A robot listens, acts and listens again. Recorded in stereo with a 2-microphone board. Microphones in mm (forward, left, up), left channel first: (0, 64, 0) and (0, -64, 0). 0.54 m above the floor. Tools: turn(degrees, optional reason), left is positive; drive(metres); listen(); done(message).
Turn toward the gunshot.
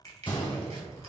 turn(degrees=40, reason="The gunshot: about 40° left or 140° left.")
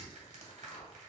listen()
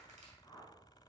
done("I heard a gunshot, but can't make it out now. It was about straight ahead or 100° left.")